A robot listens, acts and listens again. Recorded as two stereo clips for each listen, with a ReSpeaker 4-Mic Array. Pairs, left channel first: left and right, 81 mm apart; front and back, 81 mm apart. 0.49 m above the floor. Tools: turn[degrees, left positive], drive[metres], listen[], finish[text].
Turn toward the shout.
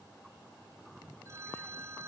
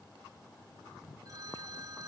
Action: listen[]
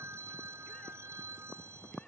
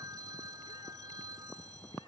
Action: listen[]
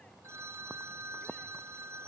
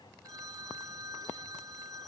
Action: finish[I can't make out a shout to turn to.]